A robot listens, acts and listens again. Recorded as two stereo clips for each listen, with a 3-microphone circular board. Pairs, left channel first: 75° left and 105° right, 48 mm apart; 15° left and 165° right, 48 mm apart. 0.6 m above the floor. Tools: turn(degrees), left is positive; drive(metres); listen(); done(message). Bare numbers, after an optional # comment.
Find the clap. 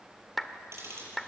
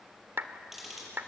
# The clap: 165° left.
turn(165)
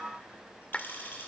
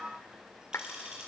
# The clap is now 10° left.
turn(10)
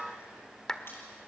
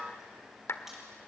done("Found it: a clap, straight ahead.")